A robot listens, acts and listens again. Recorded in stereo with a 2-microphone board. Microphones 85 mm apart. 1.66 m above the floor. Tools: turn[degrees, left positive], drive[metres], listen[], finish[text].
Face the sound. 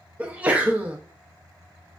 Thought: The sneeze: about 15° right or 165° right.
Action: turn[-15]
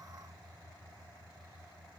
Action: listen[]
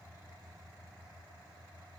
Action: finish[I heard a sneeze, but can't make it out now. It was about straight ahead or 150° right.]